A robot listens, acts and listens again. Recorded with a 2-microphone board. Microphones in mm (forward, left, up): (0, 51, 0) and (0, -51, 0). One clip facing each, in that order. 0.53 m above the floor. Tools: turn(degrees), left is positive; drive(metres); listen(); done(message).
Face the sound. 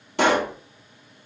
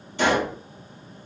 turn(degrees=90)
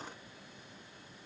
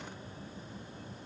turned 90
done("I heard a pop from this way, but can't make it out now.")